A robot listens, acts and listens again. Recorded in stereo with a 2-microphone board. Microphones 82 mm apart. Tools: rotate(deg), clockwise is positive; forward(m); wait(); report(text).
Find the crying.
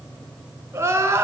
rotate(35)
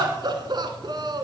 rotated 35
rotate(110)
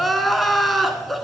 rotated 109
report("Found it: crying, straight ahead.")